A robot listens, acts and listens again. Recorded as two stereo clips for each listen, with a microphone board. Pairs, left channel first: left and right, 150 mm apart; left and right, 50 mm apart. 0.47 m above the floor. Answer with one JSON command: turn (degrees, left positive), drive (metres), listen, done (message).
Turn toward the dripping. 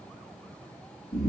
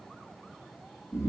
{"listen": true}
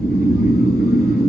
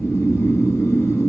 {"listen": true}
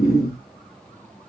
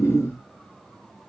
{"done": "I can't make out dripping to turn to."}